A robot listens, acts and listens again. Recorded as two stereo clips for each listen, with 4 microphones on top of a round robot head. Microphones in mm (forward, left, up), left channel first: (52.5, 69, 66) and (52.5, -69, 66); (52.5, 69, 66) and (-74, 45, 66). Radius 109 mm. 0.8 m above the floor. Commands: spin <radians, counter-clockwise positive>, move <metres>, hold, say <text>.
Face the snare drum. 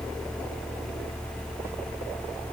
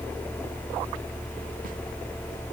hold
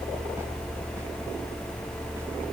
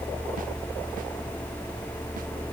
hold
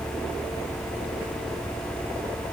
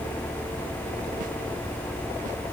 say I can't make out a snare drum.